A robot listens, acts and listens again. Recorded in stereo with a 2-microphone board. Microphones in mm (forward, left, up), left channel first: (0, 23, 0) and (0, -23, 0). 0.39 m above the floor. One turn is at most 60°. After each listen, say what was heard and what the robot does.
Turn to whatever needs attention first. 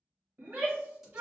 The shout: about 40° right or 140° right. Turn 40° right.
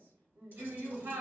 So it is at 95° right. Turn 60° right.
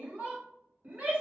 The shout is now 55° right. Turn 55° right.
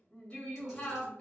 The shout is now 25° left. Turn 25° left.
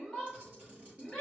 Facing the shout.